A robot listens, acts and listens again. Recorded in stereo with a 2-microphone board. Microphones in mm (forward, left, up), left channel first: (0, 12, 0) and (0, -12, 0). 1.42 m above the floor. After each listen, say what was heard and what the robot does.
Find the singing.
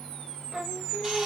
The singing: about 35° right or 145° right. Turn 35° right.
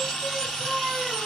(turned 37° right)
Facing the singing.